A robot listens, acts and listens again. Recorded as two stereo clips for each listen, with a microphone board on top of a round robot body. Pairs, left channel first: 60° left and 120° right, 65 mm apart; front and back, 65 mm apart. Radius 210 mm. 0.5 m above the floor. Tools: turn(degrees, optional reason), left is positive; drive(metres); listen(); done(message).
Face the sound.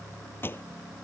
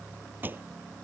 turn(degrees=115, reason="The pop: 115° left.")
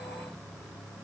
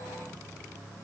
done("Facing where the pop came from. I can't hear it now.")